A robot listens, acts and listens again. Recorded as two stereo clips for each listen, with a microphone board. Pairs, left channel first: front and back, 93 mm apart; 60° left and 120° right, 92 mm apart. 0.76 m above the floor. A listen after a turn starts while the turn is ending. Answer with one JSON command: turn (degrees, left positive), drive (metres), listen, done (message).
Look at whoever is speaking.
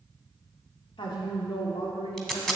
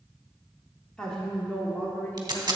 {"turn": -10}
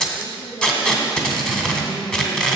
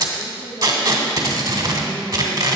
{"turn": 40}
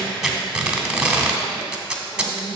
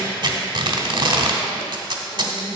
{"turn": 60}
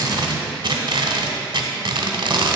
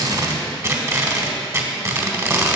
{"listen": true}
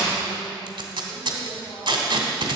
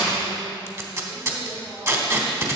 {"listen": true}
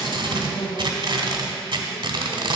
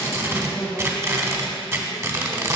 {"turn": -10}
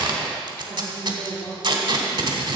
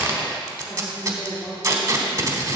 {"done": "Found it: a woman speaking, straight ahead, 1 to 2 m away."}